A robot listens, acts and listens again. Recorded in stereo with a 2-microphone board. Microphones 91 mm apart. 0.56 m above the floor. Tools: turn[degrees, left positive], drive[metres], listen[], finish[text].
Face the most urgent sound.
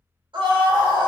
Thought: The scream: about 65° right or 115° right.
Action: turn[-65]
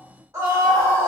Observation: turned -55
Thought: So it is at 30° right.
Action: turn[-30]
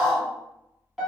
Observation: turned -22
Thought: The scream is now 10° right.
Action: turn[-10]
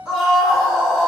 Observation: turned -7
Action: finish[Found it: a scream, straight ahead, 1 to 2 m away.]